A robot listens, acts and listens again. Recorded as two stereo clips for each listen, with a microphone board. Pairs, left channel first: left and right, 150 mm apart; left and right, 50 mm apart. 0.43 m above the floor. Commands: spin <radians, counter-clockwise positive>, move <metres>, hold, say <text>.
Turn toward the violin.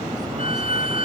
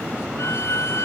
spin 1.13
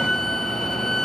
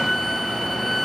say Found it: a violin, straight ahead.